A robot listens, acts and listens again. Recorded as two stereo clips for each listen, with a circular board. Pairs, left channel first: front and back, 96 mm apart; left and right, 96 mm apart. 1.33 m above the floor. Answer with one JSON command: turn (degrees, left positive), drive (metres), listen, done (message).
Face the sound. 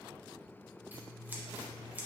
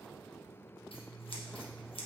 {"turn": 110}
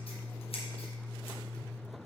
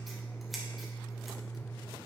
{"done": "Facing the scissors."}